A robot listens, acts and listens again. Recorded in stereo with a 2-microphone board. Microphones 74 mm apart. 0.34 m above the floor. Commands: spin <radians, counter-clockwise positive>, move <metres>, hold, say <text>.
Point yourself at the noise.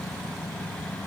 hold
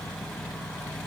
hold
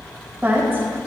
spin -0.52
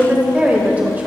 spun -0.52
spin -0.44
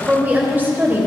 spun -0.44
spin -0.52
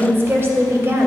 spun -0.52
spin -0.61
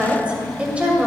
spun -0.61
spin -0.35
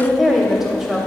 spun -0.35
say Facing the woman speaking, 1 to 2 m away.